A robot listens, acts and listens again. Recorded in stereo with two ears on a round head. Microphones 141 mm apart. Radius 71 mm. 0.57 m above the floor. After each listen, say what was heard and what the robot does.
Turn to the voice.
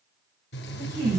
The woman speaking: about 65° right or 115° right. Turn 65° right.
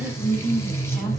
Facing the woman speaking.